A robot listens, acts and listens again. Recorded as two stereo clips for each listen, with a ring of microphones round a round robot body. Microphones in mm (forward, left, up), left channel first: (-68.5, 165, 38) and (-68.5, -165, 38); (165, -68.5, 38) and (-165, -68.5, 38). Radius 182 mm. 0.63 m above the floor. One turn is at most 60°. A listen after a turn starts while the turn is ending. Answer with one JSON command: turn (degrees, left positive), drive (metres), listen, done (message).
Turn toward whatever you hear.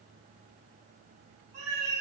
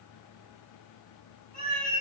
{"turn": -60}
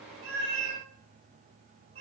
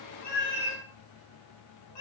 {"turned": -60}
{"turn": -15}
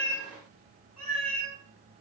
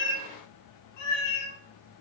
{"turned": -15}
{"done": "Found it: a cat meowing, straight ahead."}